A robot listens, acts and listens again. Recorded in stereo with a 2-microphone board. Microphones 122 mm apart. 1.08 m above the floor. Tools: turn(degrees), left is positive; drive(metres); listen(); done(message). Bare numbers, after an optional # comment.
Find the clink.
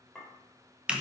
turn(30)
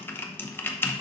listen()
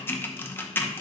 listen()
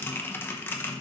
done("I heard a clink, but can't make it out now. It was about 25° right or 145° left.")